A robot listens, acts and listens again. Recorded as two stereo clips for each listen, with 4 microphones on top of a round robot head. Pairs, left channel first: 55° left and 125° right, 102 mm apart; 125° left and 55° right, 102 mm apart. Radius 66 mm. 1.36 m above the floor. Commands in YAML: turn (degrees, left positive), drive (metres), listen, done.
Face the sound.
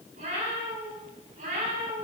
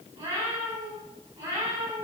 turn: -120
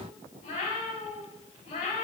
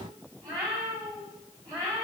turn: 10
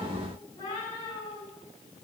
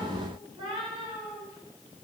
done: "Facing the cat meowing."